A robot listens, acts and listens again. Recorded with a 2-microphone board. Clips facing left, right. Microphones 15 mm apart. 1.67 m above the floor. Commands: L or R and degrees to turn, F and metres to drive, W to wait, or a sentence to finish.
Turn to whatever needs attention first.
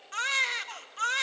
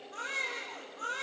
L70
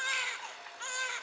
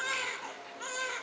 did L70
L10
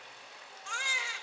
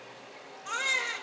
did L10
Facing the baby crying.